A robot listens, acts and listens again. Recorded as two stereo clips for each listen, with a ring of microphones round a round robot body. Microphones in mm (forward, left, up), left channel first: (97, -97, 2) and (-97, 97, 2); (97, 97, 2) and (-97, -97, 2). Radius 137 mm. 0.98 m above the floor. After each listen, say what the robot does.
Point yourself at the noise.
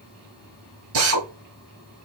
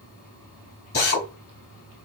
Turn 100° left.
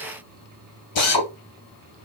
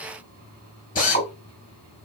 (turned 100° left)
Turn 20° right.
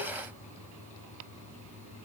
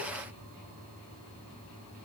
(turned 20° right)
Keep listening.
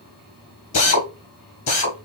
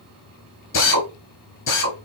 Found it: a drill, straight ahead, 2 to 4 m away.